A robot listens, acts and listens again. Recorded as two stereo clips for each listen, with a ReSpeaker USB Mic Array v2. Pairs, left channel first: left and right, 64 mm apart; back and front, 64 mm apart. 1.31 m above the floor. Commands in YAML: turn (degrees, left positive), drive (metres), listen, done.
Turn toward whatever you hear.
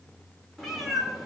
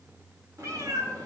done: "Facing the cat meowing."